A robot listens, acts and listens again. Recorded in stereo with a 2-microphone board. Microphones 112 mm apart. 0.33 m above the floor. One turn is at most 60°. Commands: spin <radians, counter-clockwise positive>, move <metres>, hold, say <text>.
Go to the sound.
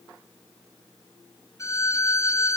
spin 0.52
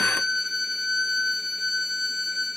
move 1.0
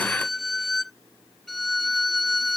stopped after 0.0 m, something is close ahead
say Blocked. The violin is further on, straight ahead.